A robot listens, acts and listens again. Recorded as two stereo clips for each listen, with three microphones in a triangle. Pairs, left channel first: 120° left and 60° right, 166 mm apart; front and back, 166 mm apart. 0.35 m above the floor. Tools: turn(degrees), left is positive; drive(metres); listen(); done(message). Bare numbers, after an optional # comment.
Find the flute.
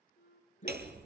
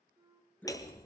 # The flute: 110° left.
turn(110)
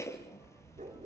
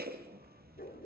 listen()
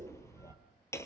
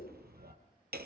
listen()
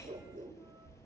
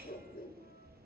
done("I heard a flute from this way, but can't make it out now.")